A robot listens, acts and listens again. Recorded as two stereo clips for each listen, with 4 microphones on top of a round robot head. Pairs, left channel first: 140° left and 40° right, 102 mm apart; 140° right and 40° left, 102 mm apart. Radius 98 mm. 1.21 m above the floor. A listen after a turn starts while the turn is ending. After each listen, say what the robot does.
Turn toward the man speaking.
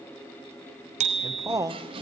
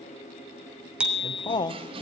Turn 95° right.
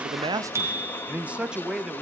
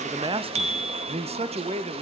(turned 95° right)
Turn 50° left.
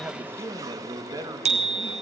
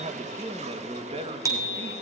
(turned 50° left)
Turn 15° left.
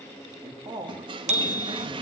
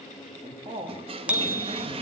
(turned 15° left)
Facing the man speaking, 2 to 4 m away.